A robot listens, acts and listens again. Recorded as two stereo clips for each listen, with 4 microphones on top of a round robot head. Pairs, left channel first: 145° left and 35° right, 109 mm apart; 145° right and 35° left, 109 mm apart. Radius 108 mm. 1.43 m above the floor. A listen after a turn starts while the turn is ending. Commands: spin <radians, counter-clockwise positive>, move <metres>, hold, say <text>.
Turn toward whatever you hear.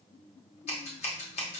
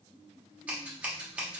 spin 2.01
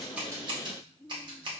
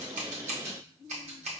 spin 0.17
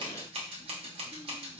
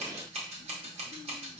say Facing the scissors, under 1 m away.